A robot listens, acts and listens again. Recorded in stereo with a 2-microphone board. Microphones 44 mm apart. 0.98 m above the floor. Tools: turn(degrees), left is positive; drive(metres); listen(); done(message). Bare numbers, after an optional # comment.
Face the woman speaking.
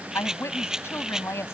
# The woman speaking: about 75° left or 105° left.
turn(75)
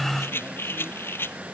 listen()
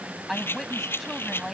done("Facing the woman speaking.")